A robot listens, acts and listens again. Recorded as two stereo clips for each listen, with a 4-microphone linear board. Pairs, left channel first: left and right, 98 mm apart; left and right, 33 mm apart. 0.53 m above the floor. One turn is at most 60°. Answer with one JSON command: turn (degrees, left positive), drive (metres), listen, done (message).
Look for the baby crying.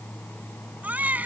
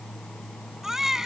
{"turn": -15}
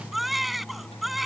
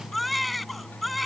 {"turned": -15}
{"done": "Facing the baby crying."}